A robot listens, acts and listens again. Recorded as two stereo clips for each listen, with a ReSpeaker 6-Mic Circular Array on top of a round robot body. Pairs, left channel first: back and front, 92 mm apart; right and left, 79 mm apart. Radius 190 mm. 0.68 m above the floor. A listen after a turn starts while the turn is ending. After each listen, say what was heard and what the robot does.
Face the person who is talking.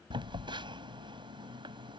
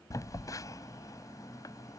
Keep listening.
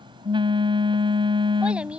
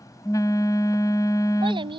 The child speaking: 80° left. Turn 80° left.
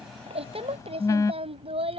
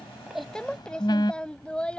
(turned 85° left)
The child speaking is now 15° right. Turn 15° right.
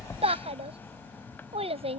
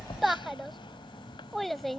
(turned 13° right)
Found it: a child speaking, straight ahead.